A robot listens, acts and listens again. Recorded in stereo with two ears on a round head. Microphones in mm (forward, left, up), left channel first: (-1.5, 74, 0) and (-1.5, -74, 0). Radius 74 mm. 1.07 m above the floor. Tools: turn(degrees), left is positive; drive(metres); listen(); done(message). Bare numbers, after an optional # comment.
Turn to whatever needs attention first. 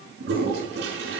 listen()
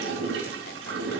listen()
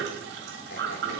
done("I can't make out anything urgent, only a toilet flushing.")